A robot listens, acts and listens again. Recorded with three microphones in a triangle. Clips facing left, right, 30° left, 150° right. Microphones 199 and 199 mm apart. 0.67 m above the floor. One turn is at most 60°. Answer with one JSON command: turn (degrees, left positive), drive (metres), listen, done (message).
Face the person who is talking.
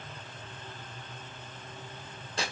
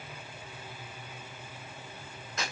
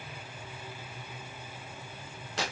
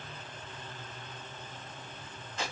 {"listen": true}
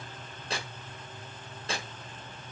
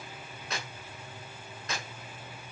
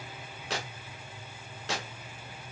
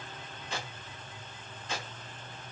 {"listen": true}
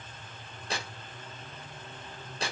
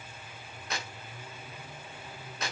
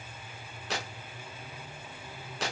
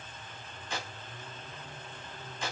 {"done": "I can't make out anyone speaking, only tearing paper."}